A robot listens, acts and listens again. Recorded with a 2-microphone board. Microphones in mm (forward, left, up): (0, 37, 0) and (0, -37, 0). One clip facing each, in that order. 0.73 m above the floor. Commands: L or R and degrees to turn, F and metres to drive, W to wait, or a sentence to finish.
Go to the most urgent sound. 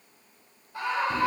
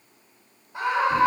R20
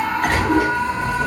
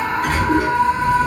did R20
F1.0
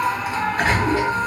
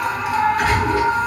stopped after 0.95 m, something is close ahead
I am next to the scream.